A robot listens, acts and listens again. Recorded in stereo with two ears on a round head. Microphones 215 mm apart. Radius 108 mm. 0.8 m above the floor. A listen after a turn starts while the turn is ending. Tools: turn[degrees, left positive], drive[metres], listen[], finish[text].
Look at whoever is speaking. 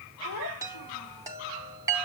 Action: turn[90]
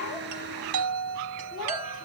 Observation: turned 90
Action: listen[]
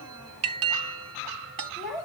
Action: finish[Facing the child speaking.]